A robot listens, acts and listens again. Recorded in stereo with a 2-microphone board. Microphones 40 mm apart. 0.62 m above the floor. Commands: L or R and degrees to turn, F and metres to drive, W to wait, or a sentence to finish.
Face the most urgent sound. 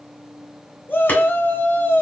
L60
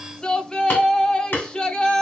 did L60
L25
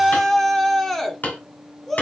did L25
L10
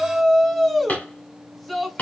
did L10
Facing the shout, 1 to 2 m away.